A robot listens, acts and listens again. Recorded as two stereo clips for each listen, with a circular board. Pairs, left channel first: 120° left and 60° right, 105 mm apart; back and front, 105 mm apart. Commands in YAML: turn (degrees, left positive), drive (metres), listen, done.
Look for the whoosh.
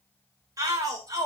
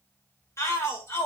listen: true
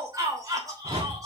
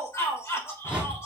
turn: -75
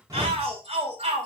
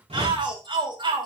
listen: true
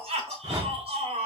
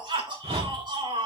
done: "Found it: a whoosh, straight ahead."